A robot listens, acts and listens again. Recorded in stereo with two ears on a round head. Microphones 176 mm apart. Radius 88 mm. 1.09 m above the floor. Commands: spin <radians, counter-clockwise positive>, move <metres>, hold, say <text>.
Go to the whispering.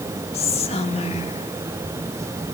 spin 0.61
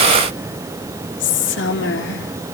spin 1.92
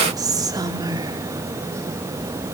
spin -0.35
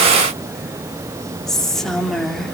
move 1.0
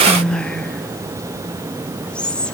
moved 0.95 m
move 1.0
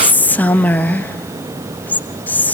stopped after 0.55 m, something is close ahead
spin 0.17
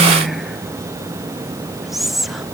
say Arrived at the whispering, straight ahead.